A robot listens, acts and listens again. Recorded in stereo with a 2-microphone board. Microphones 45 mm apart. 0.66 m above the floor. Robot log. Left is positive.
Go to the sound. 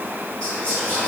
note: The whispering: about 30° left or 150° left.
cmd yaw +30
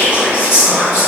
note: So it is at 115° left.
cmd yaw +115
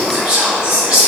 note: The whispering is now 15° right.
cmd yaw -15
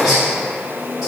cmd fwd 1.0
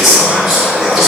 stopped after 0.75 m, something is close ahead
end: I am next to the whispering.